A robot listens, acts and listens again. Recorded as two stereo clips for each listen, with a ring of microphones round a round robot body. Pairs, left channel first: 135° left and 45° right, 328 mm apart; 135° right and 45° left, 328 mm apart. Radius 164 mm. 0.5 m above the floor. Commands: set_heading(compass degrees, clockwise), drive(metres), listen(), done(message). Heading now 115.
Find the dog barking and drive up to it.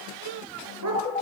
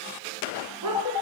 drive(1.0)
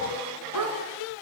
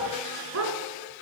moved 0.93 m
drive(1.0)
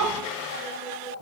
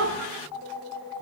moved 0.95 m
drive(1.0)
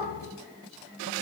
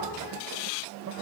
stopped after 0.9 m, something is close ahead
listen()
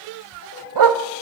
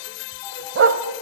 set_heading(125)
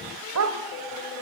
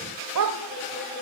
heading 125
done("Arrived at the dog barking, straight ahead.")